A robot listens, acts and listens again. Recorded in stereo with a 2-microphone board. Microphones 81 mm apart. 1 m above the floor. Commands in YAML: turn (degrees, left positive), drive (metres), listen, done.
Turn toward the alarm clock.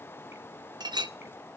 listen: true
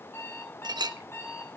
turn: 30
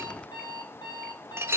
turn: 120
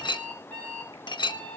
turn: 20
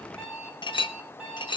done: "Facing the alarm clock, over 4 m away."